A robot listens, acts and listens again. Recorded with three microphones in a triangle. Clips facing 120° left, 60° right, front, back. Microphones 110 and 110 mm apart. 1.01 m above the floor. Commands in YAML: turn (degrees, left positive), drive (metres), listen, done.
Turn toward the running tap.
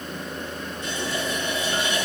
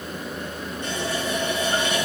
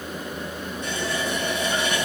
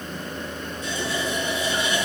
turn: -30
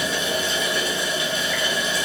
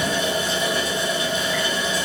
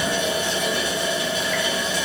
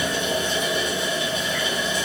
turn: -10
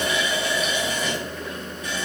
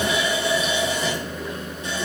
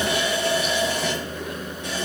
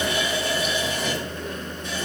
done: "Found it: a running tap, straight ahead."